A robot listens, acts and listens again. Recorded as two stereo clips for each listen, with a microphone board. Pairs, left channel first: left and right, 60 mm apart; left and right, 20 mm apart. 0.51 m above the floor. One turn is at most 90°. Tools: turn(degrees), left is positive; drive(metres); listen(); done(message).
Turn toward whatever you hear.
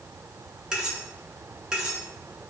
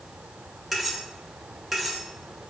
turn(degrees=-30)
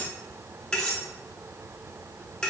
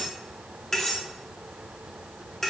turn(degrees=15)
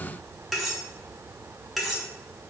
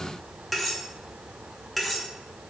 done("Facing the cutlery clinking, under 1 m away.")